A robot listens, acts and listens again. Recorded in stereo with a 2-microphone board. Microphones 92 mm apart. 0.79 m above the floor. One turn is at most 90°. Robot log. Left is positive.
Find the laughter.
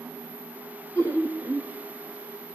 note: The laughter: about 35° left or 145° left.
cmd yaw +35
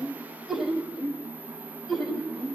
end: Found it: laughter, straight ahead.